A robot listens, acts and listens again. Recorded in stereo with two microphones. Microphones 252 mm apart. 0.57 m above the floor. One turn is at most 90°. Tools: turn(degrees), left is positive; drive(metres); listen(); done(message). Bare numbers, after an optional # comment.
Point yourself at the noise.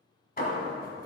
# The hammering: about 35° left or 145° left.
turn(35)
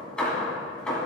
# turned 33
done("Facing the hammering.")